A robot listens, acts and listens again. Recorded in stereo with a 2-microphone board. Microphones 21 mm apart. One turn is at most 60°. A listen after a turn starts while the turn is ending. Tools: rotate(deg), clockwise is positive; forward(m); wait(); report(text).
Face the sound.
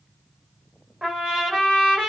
rotate(60)
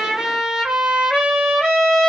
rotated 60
rotate(50)
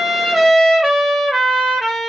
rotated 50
report("Found it: a trumpet, straight ahead.")